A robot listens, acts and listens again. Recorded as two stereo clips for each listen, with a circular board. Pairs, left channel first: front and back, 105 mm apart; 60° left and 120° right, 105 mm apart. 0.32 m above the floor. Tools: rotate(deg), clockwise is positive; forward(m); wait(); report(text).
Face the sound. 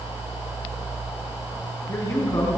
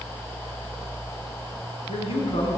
rotate(-50)
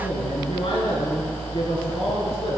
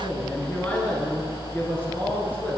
rotate(15)
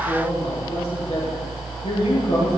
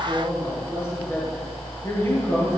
report("Found it: a man speaking, straight ahead, over 4 m away.")